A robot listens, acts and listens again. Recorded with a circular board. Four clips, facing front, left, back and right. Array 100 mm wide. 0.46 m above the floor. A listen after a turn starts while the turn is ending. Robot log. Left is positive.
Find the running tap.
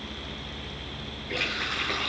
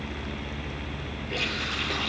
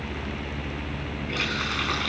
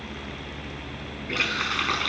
note: The running tap: 115° right.
cmd yaw -115
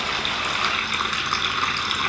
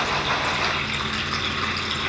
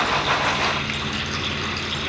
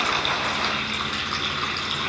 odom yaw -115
end: Facing the running tap.